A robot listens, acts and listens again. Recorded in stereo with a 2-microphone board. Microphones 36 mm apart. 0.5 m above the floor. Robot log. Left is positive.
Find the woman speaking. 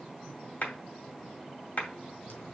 cmd idle
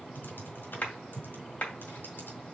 cmd idle
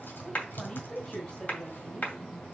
note: The woman speaking: about 30° left or 150° left.
cmd yaw +30
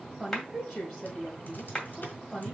note: So it is at 10° left.
cmd yaw +10
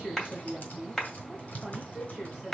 end: Found it: a woman speaking, straight ahead.